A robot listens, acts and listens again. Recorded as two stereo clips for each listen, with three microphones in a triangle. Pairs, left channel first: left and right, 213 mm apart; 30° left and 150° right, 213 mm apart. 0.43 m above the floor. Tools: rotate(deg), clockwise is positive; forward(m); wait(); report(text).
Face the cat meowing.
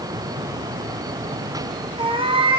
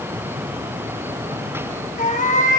rotate(25)
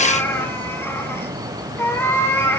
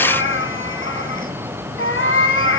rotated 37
rotate(-10)
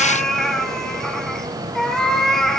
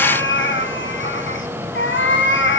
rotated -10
report("Facing the cat meowing.")